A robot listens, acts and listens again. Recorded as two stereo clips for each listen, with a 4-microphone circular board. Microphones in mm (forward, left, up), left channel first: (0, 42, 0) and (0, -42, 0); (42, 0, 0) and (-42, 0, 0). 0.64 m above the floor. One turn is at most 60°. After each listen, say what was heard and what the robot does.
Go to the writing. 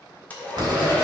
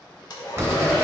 The writing: 120° right. Turn 60° right.
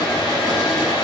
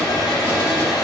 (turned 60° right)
Nothing new. It was at 60° right. Turn 60° right.
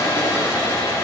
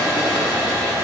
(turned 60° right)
Keep listening.
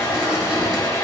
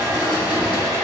I heard writing from this way, but can't make it out now. I did not reach it.